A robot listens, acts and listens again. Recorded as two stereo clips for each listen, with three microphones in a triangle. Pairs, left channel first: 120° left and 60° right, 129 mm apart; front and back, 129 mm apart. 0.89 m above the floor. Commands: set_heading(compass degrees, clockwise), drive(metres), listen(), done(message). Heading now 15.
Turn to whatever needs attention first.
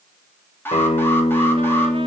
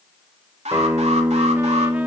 set_heading(185)
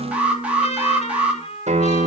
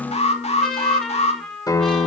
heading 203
set_heading(183)
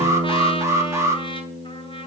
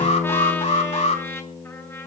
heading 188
done("Found it: an alarm, straight ahead, 2 to 4 m away.")